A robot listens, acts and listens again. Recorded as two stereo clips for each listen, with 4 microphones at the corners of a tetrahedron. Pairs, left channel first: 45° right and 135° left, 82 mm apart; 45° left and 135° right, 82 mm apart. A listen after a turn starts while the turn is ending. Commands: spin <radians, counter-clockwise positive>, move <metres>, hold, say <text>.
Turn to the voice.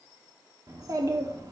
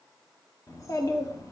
spin 1.57
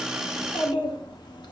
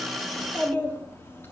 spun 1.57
spin -0.26
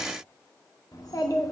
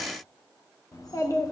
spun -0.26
say Found it: a child speaking, straight ahead, 1 to 2 m away.